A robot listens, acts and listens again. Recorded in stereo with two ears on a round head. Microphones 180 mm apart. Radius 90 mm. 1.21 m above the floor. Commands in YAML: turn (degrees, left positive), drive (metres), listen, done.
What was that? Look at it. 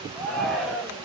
turn: 30
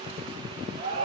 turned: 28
turn: -30
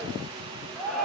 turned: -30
done: "Found it: a shout, straight ahead."